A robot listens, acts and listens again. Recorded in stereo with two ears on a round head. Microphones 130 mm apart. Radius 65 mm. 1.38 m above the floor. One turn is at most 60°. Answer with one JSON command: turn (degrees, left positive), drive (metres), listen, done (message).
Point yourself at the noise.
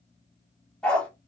{"turn": 30}
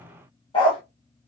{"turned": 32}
{"turn": 60}
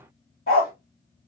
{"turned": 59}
{"turn": 60}
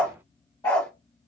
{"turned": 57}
{"turn": 25}
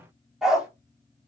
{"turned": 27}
{"done": "Found it: a dog barking, straight ahead."}